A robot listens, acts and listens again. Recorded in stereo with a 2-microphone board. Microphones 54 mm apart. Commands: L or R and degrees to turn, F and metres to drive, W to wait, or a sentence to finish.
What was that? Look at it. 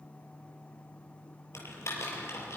L60
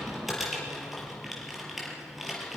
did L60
Found it: typing on a keyboard, straight ahead, over 4 m away.